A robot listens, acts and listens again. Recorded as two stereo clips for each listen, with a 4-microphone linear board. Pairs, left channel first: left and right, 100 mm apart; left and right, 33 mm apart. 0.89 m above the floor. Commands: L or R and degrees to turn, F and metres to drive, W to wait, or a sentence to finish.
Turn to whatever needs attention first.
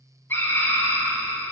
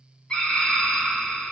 L20
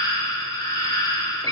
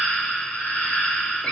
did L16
L140
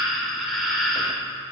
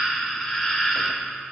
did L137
Facing the scream.